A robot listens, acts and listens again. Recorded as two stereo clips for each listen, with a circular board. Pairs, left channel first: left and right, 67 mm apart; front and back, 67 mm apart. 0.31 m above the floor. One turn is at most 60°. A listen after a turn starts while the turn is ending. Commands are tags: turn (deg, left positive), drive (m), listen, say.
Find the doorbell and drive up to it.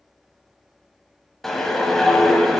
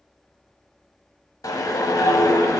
<listen/>
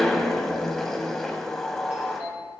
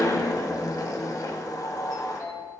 <turn deg="-25"/>
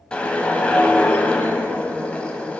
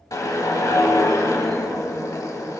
<listen/>
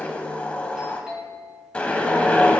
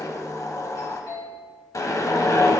<turn deg="-10"/>
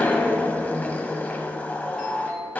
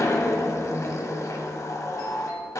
<drive m="1.0"/>
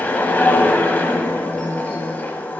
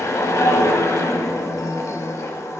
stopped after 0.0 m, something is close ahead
<listen/>
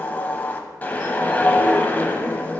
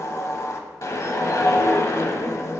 <listen/>
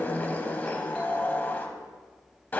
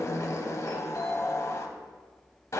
<say>Something is in my way. I am facing the doorbell but have not reached it.</say>